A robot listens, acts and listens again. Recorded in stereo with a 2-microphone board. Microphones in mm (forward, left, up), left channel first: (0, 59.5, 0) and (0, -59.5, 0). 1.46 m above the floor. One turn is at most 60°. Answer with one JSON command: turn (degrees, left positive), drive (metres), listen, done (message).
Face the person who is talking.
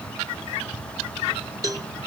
{"listen": true}
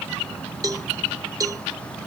{"listen": true}
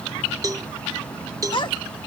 {"turn": 40}
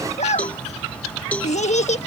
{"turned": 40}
{"turn": 60}
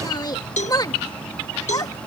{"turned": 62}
{"turn": 35}
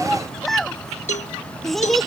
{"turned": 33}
{"done": "Found it: a child speaking, straight ahead."}